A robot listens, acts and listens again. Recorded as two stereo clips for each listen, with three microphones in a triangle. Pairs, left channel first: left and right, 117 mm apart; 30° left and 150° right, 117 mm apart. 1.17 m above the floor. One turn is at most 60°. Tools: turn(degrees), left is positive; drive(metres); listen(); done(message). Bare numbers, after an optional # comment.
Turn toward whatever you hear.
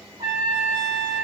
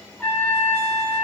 # The trumpet: 45° right.
turn(-45)
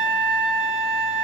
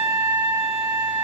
done("Found it: a trumpet, straight ahead.")